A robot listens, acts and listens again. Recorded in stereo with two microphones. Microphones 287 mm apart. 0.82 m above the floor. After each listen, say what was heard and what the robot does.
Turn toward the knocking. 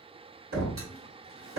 The knocking: about 70° right or 110° right. Turn 70° right.
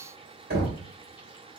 So it is at 35° right. Turn 35° right.
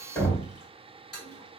Found it: knocking, straight ahead.